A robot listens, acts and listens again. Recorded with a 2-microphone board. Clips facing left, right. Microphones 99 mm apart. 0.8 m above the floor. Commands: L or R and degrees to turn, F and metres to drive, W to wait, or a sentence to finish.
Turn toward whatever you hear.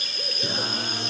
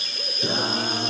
R25
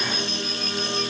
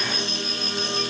Facing the singing.